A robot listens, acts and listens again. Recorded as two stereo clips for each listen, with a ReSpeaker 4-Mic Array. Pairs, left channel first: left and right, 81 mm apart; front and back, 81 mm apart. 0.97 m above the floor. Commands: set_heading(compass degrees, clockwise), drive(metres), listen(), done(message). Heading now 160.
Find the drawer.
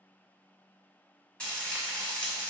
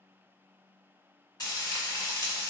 listen()
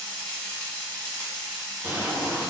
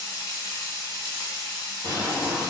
set_heading(190)
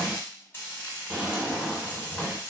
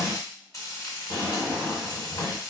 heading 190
set_heading(205)
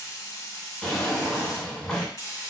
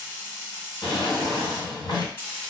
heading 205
done("Facing the drawer, 1 to 2 m away.")